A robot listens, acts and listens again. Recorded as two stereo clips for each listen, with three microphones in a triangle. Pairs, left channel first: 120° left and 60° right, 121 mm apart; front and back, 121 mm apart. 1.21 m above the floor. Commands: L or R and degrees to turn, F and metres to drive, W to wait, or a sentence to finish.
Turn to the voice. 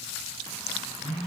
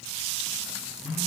W
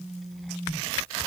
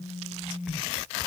W
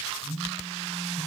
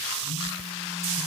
I can't make out anyone speaking to turn to.